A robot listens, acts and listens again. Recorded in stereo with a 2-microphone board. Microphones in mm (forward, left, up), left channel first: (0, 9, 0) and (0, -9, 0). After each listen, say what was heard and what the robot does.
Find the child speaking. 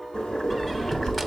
The child speaking: about 60° left or 120° left. Turn 60° left.
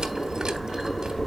So it is at 60° left. Turn 60° left.
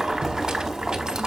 Keep listening.
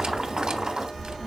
Found it: a child speaking, straight ahead, 1 to 2 m away.